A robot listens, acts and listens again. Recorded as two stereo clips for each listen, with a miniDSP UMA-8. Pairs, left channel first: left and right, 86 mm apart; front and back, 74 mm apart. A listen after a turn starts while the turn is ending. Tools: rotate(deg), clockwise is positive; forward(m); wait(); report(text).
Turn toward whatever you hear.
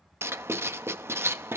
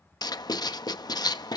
rotate(30)
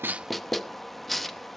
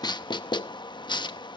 report("Facing the writing, under 1 m away.")